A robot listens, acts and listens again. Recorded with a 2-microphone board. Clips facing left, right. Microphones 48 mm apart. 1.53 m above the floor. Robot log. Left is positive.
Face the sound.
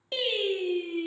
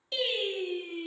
note: The singing: about 25° left or 155° left.
cmd yaw +25
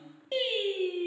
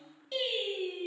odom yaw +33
note: The singing: about 30° left or 150° left.
cmd yaw +30
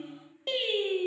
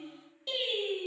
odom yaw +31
note: So it is at 140° left.
cmd yaw +140
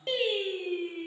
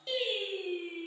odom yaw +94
note: The singing is now 55° left.
cmd yaw +55
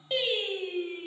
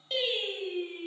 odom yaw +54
note: The singing is now 20° left.
cmd yaw +20
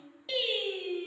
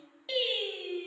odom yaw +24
end: Facing the singing, 2 to 4 m away.